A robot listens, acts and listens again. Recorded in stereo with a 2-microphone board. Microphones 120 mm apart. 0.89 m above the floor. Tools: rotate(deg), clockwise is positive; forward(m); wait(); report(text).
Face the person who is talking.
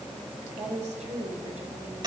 rotate(90)
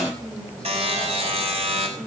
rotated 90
report("Facing the woman speaking, over 4 m away.")